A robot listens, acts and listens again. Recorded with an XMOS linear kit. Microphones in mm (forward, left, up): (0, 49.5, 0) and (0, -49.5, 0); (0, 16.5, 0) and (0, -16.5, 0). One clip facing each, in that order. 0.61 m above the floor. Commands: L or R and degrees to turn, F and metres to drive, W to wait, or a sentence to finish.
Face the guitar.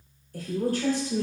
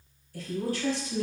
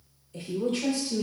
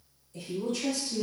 W
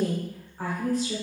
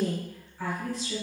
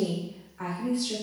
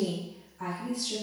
W
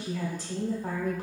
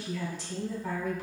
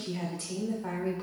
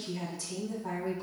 I can't make out a guitar, only a woman speaking.